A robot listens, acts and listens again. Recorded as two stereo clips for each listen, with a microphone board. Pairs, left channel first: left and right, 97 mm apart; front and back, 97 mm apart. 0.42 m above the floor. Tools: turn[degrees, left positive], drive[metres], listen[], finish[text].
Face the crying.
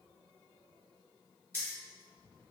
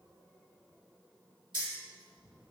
Action: listen[]
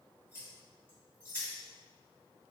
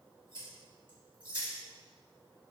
Action: listen[]
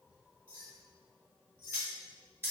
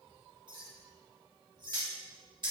Action: finish[I can't make out crying to turn to.]